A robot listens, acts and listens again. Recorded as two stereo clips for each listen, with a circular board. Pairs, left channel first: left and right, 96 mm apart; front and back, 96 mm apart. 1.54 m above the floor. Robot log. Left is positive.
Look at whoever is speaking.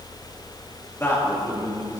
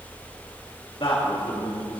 note: The man speaking: 30° left.
cmd yaw +30
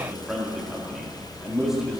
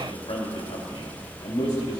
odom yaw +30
end: Facing the man speaking.